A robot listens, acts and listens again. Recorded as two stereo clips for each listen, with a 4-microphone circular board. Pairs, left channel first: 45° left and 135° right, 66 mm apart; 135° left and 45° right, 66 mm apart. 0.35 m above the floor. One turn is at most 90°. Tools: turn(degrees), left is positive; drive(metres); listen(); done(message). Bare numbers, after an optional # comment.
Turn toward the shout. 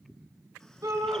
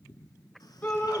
# The shout: 165° right.
turn(-90)
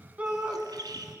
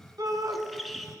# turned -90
# The shout is now 70° right.
turn(-70)
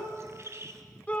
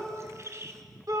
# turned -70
# The shout is now 20° right.
turn(-20)
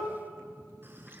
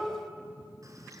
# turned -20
listen()
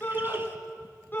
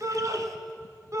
# The shout is now 10° right.
turn(-10)
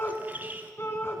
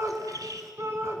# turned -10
done("Found it: a shout, straight ahead.")